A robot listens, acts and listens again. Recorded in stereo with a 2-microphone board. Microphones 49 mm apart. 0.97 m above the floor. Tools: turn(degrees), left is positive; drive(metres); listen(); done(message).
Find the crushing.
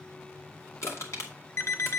turn(degrees=70)
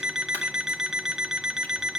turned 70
listen()
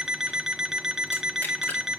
listen()
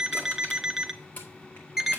turn(degrees=35)
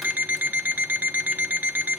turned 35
listen()
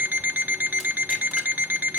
listen()
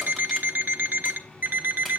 done("Facing where the crushing came from. I can't hear it now.")